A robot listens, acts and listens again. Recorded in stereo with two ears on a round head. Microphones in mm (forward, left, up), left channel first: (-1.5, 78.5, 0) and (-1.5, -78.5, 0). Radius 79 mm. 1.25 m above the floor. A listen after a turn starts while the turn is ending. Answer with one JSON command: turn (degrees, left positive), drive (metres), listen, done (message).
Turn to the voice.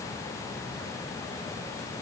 {"listen": true}
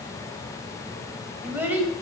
{"turn": -30}
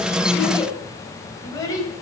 {"turn": 20}
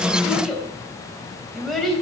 {"done": "Facing the child speaking."}